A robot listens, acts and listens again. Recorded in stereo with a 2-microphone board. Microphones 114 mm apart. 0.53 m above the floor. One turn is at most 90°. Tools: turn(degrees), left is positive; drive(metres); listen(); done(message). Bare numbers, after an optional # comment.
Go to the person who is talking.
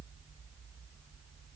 listen()
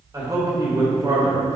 # The man speaking: about 30° right or 150° right.
turn(-30)
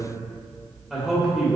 drive(1.0)
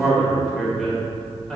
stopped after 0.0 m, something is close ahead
done("Blocked. The man speaking is further on, straight ahead.")